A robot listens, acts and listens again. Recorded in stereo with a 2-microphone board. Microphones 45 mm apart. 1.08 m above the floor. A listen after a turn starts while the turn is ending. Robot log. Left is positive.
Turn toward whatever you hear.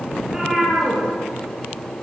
cmd yaw -30
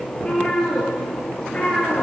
note: So it is at 25° left.
cmd yaw +25
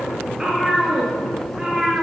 note: The cat meowing is now 10° right.
cmd yaw -10
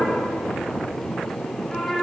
end: Facing the cat meowing, over 4 m away.